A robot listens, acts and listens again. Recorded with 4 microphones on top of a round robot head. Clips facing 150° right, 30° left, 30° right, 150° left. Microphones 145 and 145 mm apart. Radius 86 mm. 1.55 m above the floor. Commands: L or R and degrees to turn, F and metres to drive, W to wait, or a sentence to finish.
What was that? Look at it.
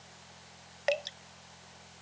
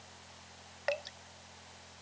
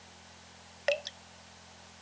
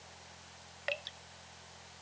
R80
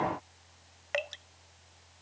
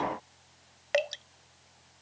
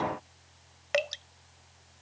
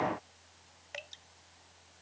R20
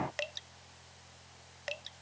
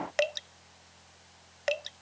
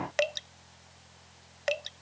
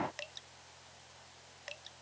Facing the dripping.